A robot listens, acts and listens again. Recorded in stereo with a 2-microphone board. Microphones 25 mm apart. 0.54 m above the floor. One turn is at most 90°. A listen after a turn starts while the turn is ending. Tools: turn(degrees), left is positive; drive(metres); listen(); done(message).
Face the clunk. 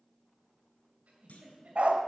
turn(degrees=90)
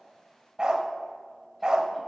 done("Facing where the clunk came from. I can't hear it now.")